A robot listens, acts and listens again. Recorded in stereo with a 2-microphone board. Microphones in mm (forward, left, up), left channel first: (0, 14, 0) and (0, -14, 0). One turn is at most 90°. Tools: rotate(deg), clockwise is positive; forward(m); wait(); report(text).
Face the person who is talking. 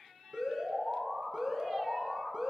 wait()
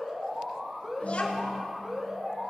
rotate(-60)
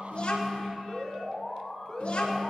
rotate(-60)
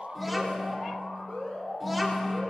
report("Found it: a child speaking, straight ahead.")